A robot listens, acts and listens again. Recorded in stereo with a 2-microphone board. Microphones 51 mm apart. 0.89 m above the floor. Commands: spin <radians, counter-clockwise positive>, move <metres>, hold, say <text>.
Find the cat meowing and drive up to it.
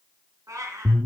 spin -1.31
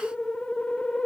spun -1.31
hold
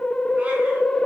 hold
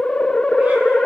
say I heard a cat meowing, but can't make it out now. It was about straight ahead or 30° right. I did not reach it.